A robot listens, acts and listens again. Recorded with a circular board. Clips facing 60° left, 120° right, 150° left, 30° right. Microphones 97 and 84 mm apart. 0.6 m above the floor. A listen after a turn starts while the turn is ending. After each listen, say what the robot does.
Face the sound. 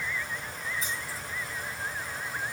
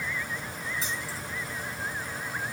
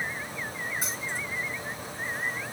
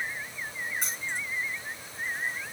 Turn 125° right.
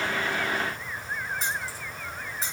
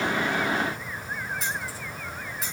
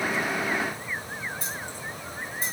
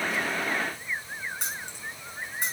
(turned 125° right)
Facing the keys jangling.